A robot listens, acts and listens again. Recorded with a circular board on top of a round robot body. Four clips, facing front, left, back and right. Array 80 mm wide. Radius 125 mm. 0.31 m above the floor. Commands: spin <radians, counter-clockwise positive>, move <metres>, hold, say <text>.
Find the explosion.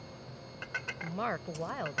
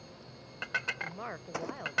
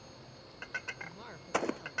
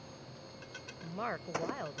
spin 3.14
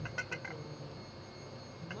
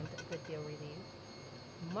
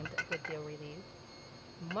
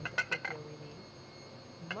say Facing where the explosion came from. I can't hear it now.